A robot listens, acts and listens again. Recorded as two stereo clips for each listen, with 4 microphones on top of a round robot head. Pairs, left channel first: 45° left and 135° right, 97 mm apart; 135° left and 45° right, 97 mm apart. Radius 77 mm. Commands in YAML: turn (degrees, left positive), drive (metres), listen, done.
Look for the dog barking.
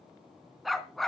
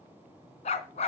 turn: 130
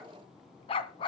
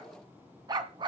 done: "Facing the dog barking, 1 to 2 m away."